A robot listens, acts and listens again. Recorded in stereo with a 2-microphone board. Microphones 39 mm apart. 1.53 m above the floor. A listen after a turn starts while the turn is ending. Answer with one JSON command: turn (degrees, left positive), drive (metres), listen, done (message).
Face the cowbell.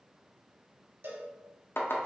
{"turn": -60}
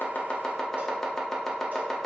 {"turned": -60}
{"listen": true}
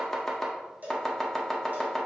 {"turn": -50}
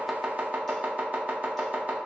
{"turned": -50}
{"listen": true}
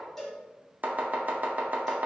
{"done": "Facing the cowbell, 1 to 2 m away."}